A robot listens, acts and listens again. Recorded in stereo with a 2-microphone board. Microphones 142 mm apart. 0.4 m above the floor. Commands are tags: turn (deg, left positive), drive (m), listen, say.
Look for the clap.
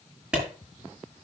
<turn deg="-30"/>
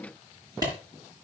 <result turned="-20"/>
<turn deg="-155"/>
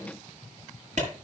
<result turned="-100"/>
<turn deg="-55"/>
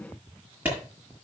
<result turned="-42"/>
<turn deg="-10"/>
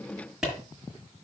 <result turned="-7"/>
<say>Found it: a clap, straight ahead, over 4 m away.</say>